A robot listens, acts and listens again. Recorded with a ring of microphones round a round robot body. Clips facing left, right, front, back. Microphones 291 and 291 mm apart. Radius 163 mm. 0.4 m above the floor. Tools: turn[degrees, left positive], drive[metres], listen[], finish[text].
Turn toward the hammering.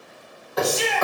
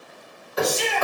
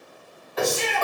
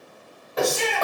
Thought: The hammering: 130° left.
Action: turn[130]
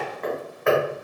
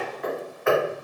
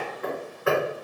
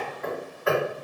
Thought: The hammering is now 50° left.
Action: turn[50]
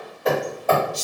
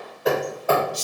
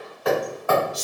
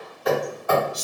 Action: finish[Found it: hammering, straight ahead.]